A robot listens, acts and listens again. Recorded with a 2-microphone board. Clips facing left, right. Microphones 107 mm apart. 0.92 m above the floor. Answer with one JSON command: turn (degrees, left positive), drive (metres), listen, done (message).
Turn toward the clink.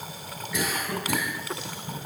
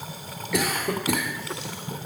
{"listen": true}
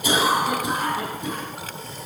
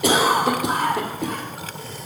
{"listen": true}
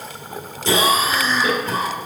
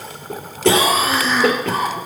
{"done": "I can't make out a clink, only a cough."}